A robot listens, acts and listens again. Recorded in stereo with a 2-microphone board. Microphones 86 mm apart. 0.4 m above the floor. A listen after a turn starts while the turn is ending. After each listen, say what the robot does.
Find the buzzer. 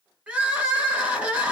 Keep listening.
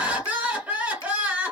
Keep listening.
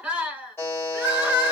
Turn 30° left.
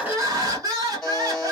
Facing the buzzer, 2 to 4 m away.